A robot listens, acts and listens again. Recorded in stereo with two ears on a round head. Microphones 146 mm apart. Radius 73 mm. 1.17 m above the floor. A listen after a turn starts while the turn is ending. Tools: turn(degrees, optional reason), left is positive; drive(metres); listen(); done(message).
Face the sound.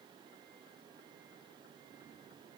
listen()
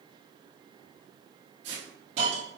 turn(degrees=-90)
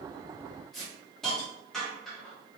done("Found it: a hiss, straight ahead, 1 to 2 m away.")